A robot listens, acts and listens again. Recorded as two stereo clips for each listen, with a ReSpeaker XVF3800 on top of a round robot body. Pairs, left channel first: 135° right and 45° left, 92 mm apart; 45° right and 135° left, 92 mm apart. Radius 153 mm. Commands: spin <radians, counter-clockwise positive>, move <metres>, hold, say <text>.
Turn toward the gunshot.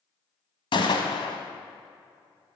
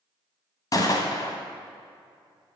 spin -1.66
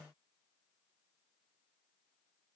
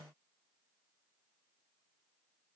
say Facing where the gunshot came from. I can't hear it now.